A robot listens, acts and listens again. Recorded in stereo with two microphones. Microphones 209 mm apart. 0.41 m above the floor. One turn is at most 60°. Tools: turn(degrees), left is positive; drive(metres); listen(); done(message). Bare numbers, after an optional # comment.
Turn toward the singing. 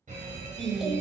turn(-30)
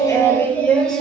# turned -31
turn(30)
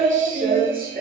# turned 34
# So it is at 45° right.
turn(-45)
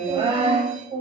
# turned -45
# The singing is now 35° right.
turn(-35)
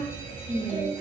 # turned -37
# The singing is now 10° right.
turn(-10)
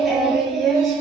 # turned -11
done("Facing the singing, 2 to 4 m away.")